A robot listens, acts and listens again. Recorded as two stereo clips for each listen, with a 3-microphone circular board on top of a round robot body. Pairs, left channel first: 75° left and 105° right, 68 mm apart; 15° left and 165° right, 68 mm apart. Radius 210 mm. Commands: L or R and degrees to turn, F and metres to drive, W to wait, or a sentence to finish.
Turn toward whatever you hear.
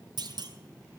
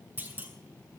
R100
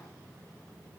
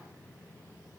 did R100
I heard a clunk from this way, but can't make it out now.